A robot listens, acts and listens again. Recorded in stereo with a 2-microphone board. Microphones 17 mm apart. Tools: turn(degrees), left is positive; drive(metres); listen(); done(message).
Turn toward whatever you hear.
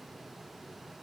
listen()
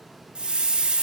turn(degrees=-65)
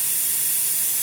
done("Found it: a hiss, straight ahead.")